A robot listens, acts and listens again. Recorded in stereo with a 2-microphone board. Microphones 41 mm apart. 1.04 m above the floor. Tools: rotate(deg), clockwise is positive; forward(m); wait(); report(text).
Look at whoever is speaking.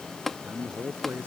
rotate(50)
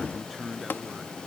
report("Facing the man speaking.")